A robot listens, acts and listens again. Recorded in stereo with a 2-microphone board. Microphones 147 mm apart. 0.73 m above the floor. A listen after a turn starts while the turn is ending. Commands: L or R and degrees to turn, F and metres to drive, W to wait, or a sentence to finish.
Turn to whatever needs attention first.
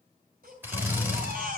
R90
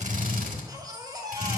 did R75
R25
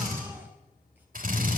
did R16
R10
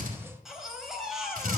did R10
Found it: a baby crying, straight ahead.